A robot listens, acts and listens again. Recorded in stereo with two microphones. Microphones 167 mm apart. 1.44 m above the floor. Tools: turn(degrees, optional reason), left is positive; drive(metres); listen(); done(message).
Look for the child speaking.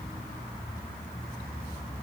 listen()
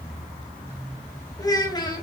turn(degrees=25, reason="The child speaking: about 25° left or 155° left.")
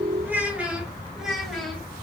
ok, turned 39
done("Facing the child speaking, 1 to 2 m away.")